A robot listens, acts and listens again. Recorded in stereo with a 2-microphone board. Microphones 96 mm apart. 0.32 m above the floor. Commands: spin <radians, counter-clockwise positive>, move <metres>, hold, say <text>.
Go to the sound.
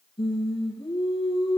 spin 1.05
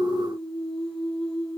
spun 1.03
move 1.0
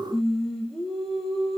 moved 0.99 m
move 1.0
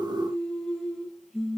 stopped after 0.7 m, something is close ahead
say Blocked. The singing is further on, straight ahead.